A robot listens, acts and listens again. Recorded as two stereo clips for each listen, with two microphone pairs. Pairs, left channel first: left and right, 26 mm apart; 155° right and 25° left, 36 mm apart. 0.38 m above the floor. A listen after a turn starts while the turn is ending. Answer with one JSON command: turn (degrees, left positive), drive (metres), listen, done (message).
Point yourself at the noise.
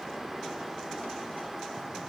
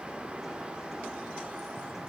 {"listen": true}
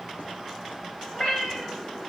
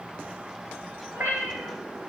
{"turn": 30}
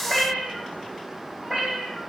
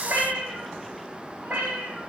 {"turn": -10}
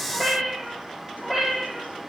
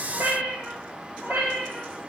{"done": "Facing the cat meowing."}